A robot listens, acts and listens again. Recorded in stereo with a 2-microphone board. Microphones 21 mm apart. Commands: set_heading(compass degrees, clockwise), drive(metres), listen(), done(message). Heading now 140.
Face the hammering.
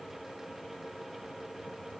listen()
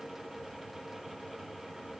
listen()
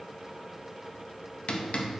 set_heading(70)
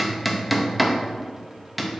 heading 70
done("Facing the hammering.")